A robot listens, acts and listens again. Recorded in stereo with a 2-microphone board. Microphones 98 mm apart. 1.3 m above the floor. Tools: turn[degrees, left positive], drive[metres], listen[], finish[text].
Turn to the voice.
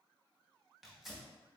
Action: listen[]
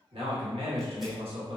Action: turn[-90]
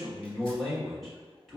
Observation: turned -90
Action: finish[Facing the man speaking.]